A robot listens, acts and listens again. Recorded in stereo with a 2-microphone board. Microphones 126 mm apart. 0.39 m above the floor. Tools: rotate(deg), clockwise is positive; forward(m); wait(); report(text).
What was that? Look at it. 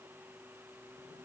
wait()
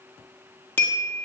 rotate(-15)
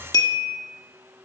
rotate(-150)
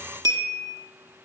rotate(30)
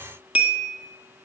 rotate(10)
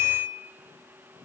report("Facing the bell, 1 to 2 m away.")